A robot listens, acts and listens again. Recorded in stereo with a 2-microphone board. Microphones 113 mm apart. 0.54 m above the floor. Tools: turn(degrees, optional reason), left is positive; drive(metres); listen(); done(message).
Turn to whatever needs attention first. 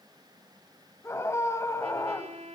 turn(degrees=25, reason="The scream: about 25° left or 155° left.")
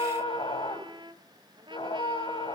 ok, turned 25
turn(degrees=130, reason="So it is at 130° left.")
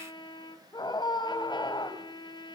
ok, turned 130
turn(degrees=40, reason="The scream is now 40° left.")
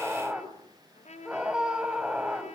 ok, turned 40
turn(degrees=-10, reason="The scream is now 10° right.")
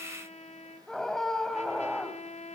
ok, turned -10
done("Facing the scream, 2 to 4 m away.")